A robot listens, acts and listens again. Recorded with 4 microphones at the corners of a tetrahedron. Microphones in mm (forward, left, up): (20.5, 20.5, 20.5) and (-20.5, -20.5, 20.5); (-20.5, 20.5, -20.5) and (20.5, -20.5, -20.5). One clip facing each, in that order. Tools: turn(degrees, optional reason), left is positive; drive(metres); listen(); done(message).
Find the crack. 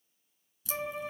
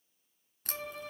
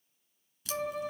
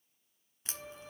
turn(degrees=-100, reason="The crack: 100° right.")
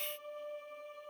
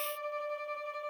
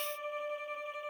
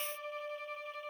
done("Facing where the crack came from. I can't hear it now.")